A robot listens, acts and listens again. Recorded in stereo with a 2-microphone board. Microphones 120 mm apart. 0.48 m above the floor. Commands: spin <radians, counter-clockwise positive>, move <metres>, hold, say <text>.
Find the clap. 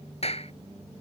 spin 1.05
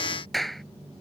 say Found it: a clap, straight ahead.